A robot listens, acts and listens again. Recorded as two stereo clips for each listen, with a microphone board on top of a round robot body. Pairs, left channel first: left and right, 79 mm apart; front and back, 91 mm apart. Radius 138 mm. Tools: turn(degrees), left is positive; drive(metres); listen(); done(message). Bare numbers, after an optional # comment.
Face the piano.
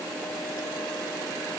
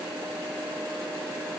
listen()
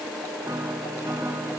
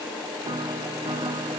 # The piano: 145° right.
turn(-145)
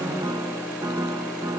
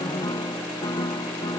# The piano is now 45° right.
turn(-45)
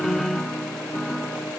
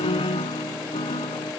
done("Found it: a piano, straight ahead.")